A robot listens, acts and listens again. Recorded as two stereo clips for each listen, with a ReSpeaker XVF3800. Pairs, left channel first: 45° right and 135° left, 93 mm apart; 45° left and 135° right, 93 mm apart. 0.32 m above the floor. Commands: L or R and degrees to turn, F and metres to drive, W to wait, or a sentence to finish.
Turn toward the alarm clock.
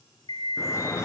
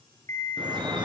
R15
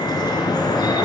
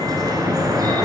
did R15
W
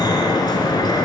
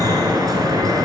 W
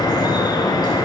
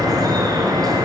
I heard an alarm clock from this way, but can't make it out now.